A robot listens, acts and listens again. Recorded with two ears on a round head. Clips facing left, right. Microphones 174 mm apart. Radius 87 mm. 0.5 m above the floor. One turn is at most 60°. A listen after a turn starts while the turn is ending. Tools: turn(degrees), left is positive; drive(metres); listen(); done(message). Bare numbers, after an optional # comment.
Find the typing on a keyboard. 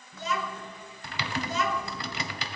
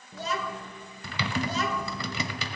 turn(-60)
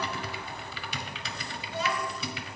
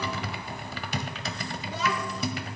# So it is at 35° right.
turn(-35)
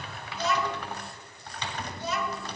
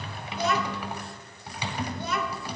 # The typing on a keyboard is now 10° right.
turn(-10)
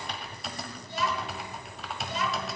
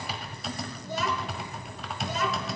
done("Facing the typing on a keyboard, 1 to 2 m away.")